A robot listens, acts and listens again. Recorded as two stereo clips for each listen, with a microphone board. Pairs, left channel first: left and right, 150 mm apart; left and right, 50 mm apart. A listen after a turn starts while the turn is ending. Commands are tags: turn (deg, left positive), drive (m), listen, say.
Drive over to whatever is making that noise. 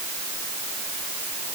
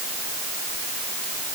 <listen/>
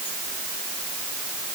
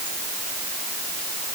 <listen/>
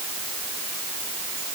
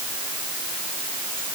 <say>I can't make out anything to turn to.</say>